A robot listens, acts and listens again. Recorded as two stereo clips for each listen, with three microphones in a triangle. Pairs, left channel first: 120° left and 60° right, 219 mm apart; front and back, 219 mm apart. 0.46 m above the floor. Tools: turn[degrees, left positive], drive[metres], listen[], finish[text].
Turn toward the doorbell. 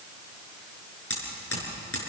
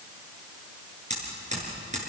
Action: listen[]
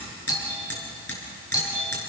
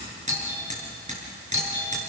Thought: The doorbell: 165° right.
Action: turn[-165]
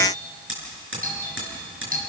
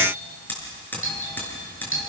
Thought: The doorbell is now 10° right.
Action: turn[-10]
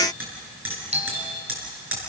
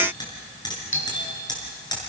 Action: finish[Found it: a doorbell, straight ahead, over 4 m away.]